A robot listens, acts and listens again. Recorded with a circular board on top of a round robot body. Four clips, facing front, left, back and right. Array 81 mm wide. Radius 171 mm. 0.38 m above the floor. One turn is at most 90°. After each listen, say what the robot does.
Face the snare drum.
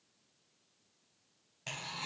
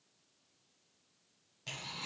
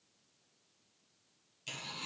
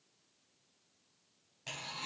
Keep listening.
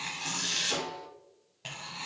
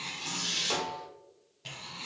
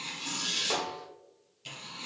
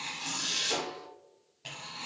Turn 90° left.
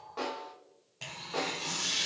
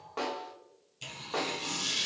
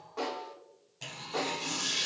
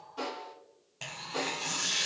Turn 80° left.
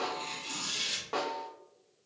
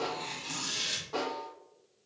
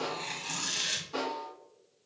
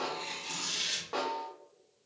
Turn 25° right.
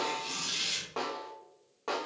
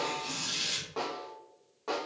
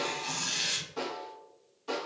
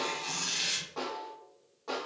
Turn 15° left.
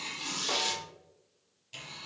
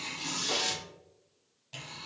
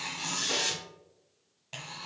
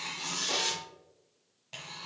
Keep listening.
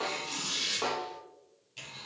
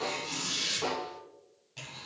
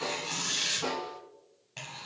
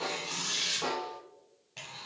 Facing the snare drum.